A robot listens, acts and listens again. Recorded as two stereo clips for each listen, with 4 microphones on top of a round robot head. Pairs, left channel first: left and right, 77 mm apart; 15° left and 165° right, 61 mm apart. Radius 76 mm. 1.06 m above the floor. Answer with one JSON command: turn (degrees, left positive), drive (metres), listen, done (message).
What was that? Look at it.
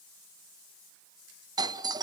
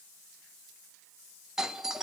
{"turn": -85}
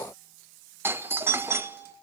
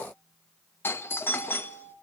{"turn": -35}
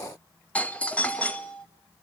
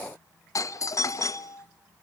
{"turn": 20}
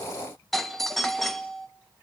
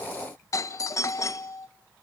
{"done": "Facing the doorbell, 1 to 2 m away."}